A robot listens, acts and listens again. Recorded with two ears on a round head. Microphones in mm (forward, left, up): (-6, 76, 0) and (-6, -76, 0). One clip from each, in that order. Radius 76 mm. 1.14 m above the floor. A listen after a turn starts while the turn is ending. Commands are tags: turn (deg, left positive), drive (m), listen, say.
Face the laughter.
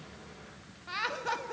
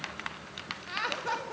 <turn deg="30"/>
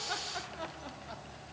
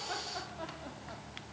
<listen/>
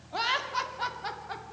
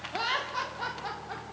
<turn deg="155"/>
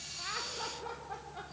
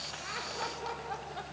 <turn deg="-20"/>
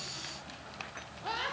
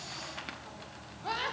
<say>Found it: laughter, straight ahead.</say>